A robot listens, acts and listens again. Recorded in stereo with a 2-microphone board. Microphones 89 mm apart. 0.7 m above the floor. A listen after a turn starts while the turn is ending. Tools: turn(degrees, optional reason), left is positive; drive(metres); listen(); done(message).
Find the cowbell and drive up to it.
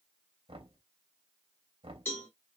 turn(degrees=25, reason="The cowbell: about 25° left or 155° left.")
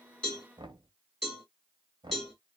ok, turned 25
drive(metres=1.0)
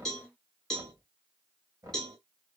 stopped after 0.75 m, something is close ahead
done("Arrived at the cowbell, straight ahead.")